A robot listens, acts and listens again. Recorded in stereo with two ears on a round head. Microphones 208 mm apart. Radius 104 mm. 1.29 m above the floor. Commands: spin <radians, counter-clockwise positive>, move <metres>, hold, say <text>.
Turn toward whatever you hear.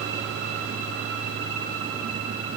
hold
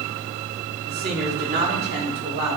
spin -0.79
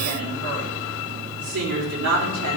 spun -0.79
spin -1.66
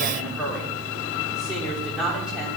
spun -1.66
say Found it: a woman speaking, straight ahead.